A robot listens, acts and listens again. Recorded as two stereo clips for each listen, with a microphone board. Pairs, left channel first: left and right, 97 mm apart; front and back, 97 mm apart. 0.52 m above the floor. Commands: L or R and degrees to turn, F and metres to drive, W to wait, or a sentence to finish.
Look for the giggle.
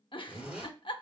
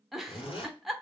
L90
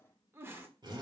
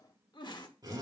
R30
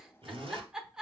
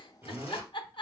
Found it: a giggle, straight ahead, under 1 m away.